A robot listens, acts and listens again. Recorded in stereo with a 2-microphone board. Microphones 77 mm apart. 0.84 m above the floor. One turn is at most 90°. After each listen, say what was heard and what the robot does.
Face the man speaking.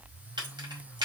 Keep listening.
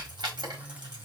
Keep listening.
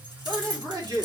The man speaking: about 55° right or 125° right. Turn 55° right.
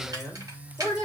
So it is at 20° right. Turn 20° right.
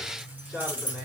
Facing the man speaking.